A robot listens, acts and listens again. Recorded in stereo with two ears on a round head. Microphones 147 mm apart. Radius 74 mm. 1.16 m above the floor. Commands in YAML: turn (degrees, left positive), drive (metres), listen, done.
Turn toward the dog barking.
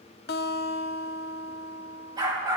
turn: -25
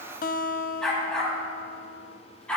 done: "Facing the dog barking, over 4 m away."